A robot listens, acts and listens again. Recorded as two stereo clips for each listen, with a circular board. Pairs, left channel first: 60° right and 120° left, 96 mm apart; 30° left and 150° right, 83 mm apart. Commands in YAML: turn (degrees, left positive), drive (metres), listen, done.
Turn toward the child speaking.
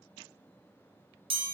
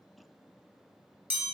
listen: true
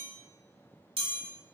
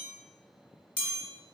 listen: true
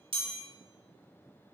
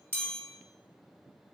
done: "I can't make out a child speaking to turn to."